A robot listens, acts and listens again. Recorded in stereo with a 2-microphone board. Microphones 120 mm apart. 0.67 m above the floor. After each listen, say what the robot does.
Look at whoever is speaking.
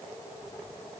Keep listening.
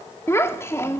Turn 20° left.
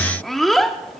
Found it: a child speaking, straight ahead, under 1 m away.